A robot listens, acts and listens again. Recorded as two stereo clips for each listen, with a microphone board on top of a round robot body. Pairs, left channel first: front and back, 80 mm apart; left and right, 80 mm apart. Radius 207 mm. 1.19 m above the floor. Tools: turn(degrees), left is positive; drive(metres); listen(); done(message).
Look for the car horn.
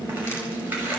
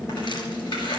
listen()
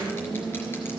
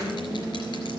listen()
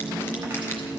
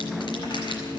done("I can't make out a car horn to turn to.")